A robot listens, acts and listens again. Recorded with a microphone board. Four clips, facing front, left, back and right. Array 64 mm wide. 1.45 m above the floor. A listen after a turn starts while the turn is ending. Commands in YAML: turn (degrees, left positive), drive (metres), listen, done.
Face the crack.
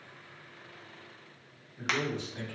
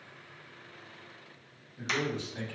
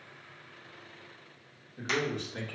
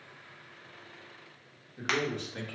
turn: -55
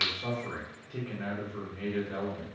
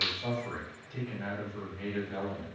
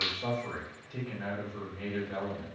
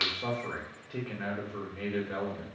done: "Facing where the crack came from. I can't hear it now."